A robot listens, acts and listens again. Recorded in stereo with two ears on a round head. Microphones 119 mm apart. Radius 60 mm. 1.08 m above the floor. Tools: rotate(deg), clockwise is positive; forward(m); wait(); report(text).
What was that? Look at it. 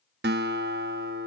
rotate(90)
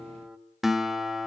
report("Found it: a guitar, straight ahead, 1 to 2 m away.")